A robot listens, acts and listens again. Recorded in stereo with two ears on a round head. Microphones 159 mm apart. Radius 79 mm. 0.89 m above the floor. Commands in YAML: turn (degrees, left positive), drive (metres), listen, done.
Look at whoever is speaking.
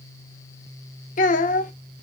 turn: 50
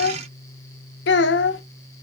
turn: 80
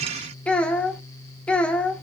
done: "Found it: a child speaking, straight ahead."